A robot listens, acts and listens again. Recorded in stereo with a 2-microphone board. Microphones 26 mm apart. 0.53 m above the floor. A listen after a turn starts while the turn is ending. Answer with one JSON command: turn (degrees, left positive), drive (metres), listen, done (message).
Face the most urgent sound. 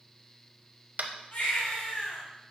{"turn": 70}
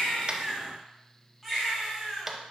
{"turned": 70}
{"done": "Found it: a baby crying, straight ahead, 2 to 4 m away."}